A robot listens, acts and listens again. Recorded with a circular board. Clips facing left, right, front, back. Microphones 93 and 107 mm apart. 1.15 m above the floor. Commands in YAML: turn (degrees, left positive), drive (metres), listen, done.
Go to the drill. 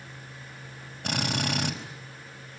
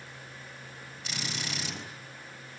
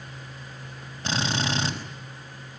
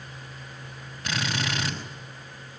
turn: 60
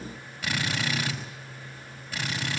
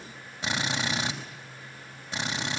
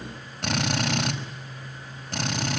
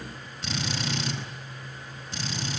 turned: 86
turn: -25
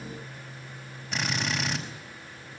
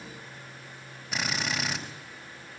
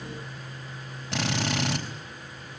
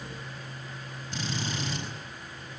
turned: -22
drive: 1.0
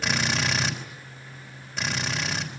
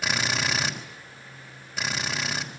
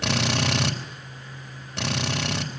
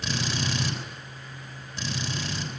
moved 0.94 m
drive: 1.0
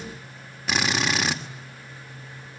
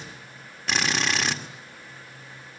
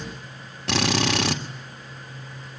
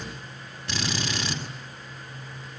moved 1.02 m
drive: 1.0
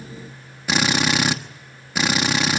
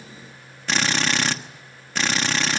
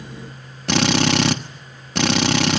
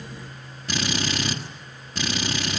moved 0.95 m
turn: 10
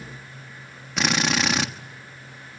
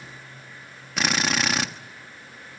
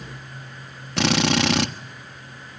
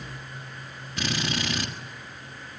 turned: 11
drive: 1.0
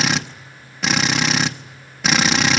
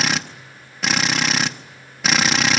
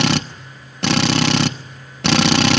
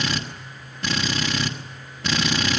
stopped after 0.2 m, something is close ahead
done: "I am next to the drill."